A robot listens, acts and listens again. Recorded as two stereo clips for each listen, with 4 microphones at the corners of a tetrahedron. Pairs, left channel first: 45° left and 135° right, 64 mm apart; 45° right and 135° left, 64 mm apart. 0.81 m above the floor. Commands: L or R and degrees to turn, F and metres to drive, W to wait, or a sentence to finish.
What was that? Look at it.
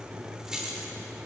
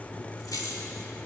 R55
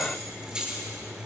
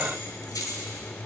R60
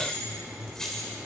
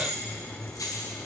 R35
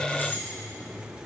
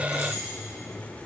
W
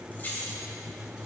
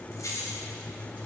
R15
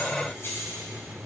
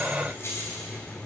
Facing the keys jangling, 2 to 4 m away.